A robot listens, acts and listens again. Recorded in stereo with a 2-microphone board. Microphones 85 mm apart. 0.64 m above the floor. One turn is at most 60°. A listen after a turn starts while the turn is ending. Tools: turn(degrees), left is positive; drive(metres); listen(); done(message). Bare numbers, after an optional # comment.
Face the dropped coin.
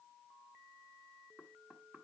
listen()
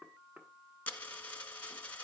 # The dropped coin: about 20° left or 160° left.
turn(20)
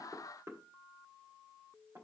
listen()
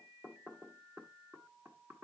done("I heard a dropped coin, but can't make it out now. It was about straight ahead or 140° left.")